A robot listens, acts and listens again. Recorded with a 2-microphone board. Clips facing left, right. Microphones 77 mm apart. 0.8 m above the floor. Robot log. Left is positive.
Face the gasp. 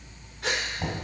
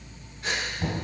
cmd yaw +90
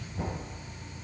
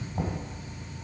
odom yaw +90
end: I heard a gasp from this way, but can't make it out now.